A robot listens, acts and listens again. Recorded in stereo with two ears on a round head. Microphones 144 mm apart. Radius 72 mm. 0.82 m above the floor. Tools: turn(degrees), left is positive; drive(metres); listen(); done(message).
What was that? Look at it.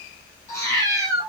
turn(degrees=20)
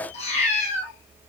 turn(degrees=135)
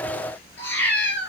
done("Found it: a cat meowing, straight ahead.")